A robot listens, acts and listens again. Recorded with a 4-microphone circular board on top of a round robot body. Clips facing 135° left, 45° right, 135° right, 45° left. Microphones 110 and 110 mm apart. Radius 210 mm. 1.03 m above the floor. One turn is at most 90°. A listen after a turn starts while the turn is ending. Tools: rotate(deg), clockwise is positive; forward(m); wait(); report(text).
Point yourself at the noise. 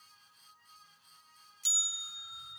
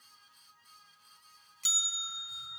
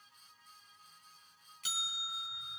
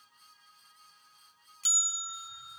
rotate(15)
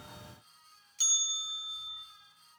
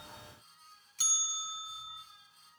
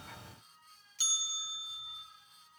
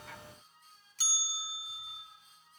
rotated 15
report("Facing the bell.")